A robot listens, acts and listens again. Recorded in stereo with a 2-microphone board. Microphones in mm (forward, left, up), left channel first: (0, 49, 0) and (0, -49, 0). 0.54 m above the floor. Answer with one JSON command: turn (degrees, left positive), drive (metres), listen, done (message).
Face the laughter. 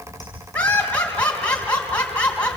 {"turn": 30}
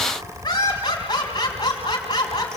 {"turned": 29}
{"turn": 140}
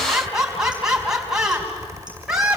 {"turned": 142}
{"done": "Facing the laughter."}